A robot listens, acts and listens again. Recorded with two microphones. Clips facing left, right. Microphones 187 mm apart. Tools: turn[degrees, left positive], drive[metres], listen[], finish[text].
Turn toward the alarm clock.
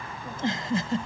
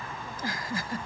Action: listen[]
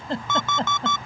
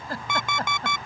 Action: turn[-30]
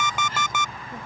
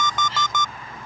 Thought: So it is at 10° left.
Action: turn[10]
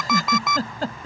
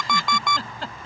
Action: finish[Found it: an alarm clock, straight ahead.]